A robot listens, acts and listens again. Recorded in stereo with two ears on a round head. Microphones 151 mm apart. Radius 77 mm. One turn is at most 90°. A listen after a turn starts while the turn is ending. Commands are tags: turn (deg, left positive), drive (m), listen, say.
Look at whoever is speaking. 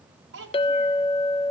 <turn deg="-90"/>
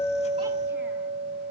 <listen/>
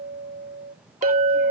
<listen/>
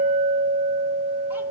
<say>Facing where the child speaking came from. I can't hear it now.</say>